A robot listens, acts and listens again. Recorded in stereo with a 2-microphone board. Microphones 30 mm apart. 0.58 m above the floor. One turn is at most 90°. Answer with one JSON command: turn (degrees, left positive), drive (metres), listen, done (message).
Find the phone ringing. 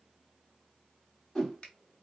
{"listen": true}
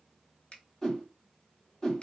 {"listen": true}
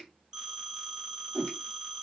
{"turn": -20}
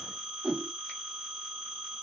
{"turn": -90}
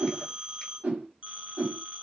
{"turn": -60}
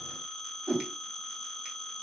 {"done": "Found it: a phone ringing, straight ahead."}